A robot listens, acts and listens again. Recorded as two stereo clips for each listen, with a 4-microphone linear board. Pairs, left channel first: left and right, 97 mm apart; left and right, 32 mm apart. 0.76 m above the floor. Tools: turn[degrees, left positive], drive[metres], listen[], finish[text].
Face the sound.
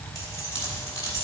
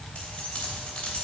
Thought: The keys jangling: about 35° left or 145° left.
Action: turn[35]
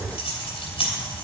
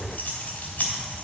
Thought: So it is at 115° left.
Action: turn[115]
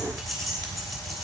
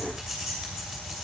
Action: finish[Facing the keys jangling, 2 to 4 m away.]